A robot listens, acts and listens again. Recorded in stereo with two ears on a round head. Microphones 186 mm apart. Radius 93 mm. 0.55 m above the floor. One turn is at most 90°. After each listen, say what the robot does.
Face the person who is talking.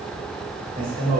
Turn 50° right.
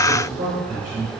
Turn 40° right.
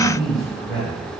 Facing the man speaking, 2 to 4 m away.